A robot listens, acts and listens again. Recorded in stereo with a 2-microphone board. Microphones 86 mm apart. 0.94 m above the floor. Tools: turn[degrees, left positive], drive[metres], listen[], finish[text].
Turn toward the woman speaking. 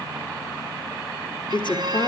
Thought: The woman speaking: about 60° left or 120° left.
Action: turn[60]
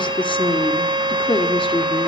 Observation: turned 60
Thought: So it is at 80° left.
Action: turn[80]
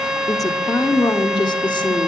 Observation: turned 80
Thought: The woman speaking is now 60° left.
Action: turn[60]
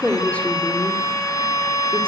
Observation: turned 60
Thought: The woman speaking is now 15° left.
Action: turn[15]
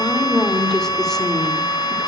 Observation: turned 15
Action: finish[Found it: a woman speaking, straight ahead, 2 to 4 m away.]